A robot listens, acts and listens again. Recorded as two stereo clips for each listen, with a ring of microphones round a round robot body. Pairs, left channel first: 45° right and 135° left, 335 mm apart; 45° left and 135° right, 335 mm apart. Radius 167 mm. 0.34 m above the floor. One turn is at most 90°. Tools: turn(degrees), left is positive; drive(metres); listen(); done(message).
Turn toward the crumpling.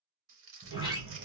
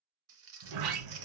turn(degrees=90)
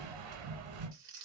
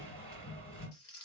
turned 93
turn(degrees=90)
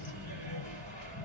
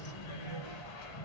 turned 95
listen()
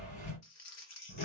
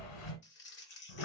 turn(degrees=-10)
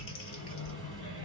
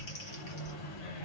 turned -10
listen()
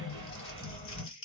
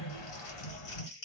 done("Facing the crumpling.")